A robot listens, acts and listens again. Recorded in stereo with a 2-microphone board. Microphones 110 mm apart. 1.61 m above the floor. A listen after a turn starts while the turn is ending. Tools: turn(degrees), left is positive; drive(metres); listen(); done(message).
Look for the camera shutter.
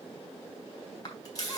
turn(degrees=35)
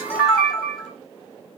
done("Facing the camera shutter.")